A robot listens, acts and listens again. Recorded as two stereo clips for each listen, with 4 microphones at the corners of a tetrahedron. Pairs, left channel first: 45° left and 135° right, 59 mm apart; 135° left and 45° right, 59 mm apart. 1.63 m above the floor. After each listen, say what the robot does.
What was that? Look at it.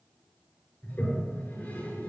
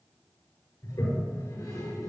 Turn 105° left.
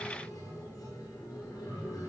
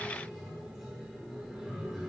Turn 40° left.
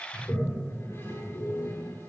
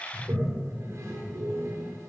Found it: a toilet flushing, straight ahead, over 4 m away.